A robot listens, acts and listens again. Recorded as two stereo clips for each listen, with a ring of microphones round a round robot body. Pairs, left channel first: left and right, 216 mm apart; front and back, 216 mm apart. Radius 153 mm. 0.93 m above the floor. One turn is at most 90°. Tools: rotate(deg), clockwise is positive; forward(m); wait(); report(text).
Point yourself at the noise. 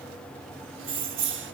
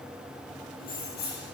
rotate(60)
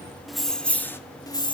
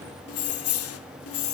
rotate(-20)
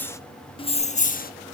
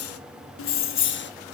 rotate(-40)
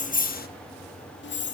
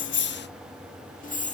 rotate(-55)
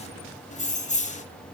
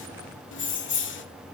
rotate(-30)
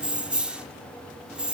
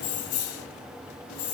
report("Found it: keys jangling, straight ahead.")